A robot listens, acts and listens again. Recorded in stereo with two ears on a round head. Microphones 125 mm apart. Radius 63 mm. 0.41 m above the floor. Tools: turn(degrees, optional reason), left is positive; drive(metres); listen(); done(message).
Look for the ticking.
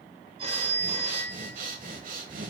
listen()
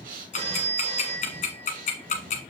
turn(degrees=55, reason="The ticking: about 55° left or 125° left.")
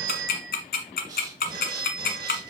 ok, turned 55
turn(degrees=70, reason="So it is at 70° left.")
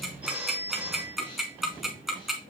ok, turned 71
done("Facing the ticking.")